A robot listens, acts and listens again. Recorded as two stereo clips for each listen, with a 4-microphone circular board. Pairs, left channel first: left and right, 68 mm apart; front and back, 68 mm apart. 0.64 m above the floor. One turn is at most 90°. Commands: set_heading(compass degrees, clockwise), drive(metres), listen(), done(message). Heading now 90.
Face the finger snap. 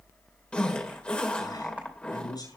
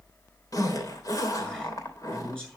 listen()
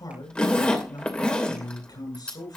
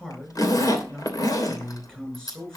listen()
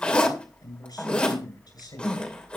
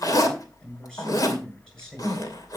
done("I can't make out a finger snap, only a man speaking and a zipper.")